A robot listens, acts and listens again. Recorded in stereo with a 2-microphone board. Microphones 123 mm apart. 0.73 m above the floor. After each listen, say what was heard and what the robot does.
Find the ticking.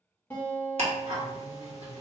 The ticking: about 50° right or 130° right. Turn 50° right.
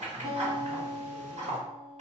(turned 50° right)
So it is at 75° right. Turn 75° right.
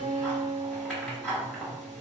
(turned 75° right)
The ticking is now 10° left. Turn 10° left.
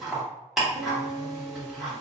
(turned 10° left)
Found it: ticking, straight ahead, 1 to 2 m away.